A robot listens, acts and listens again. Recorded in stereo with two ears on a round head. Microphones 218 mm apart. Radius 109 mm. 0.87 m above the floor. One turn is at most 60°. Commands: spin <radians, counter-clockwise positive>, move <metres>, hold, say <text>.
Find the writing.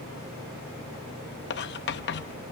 spin 0.87
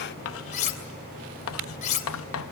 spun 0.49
spin 1.05
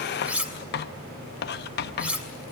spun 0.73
spin 0.96
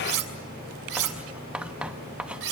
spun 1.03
say Facing the writing, under 1 m away.